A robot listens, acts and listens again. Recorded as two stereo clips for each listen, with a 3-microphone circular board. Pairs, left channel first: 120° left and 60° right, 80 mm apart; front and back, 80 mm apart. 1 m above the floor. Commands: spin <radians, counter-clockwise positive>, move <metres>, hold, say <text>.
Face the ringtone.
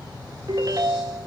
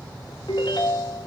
spin -0.35
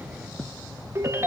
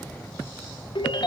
say Found it: a ringtone, straight ahead.